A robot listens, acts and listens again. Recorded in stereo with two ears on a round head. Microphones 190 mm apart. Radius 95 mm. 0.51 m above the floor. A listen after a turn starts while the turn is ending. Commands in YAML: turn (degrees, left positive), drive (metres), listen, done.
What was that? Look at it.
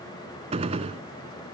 turn: -30
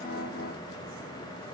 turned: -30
listen: true
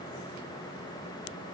done: "I heard a gunshot, but can't make it out now. It was about straight ahead or 120° right."